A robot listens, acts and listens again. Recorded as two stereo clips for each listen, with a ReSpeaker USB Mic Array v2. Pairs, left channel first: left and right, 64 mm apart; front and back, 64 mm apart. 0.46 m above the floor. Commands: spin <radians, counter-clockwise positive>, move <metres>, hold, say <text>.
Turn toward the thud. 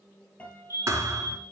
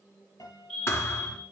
spin -0.87
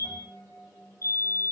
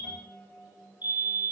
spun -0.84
say I heard a thud from this way, but can't make it out now.